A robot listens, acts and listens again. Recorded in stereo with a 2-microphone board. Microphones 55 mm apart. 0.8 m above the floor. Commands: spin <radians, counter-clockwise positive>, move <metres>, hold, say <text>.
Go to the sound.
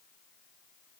hold
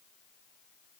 hold
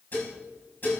spin 0.70
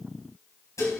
spin 1.75
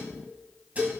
spin -0.52
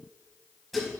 move 1.0
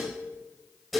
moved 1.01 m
move 1.0
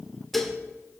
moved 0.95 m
move 1.0
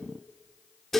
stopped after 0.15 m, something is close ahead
say Arrived at the dishes clattering, straight ahead.